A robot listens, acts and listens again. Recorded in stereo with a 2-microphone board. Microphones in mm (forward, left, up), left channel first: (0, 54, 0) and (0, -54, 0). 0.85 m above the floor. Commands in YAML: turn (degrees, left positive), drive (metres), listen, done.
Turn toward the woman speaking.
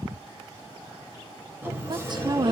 turn: -40
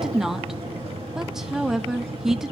done: "Facing the woman speaking, 1 to 2 m away."